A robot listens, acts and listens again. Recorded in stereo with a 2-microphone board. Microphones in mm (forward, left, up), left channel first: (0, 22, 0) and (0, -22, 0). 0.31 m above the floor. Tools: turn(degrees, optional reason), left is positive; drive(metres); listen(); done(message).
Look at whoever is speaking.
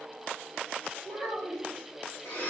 turn(degrees=20, reason="The child speaking: about 20° left or 160° left.")
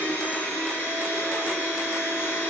listen()
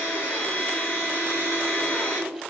listen()
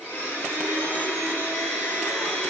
done("I heard a child speaking, but can't make it out now. It was about straight ahead or 140° left.")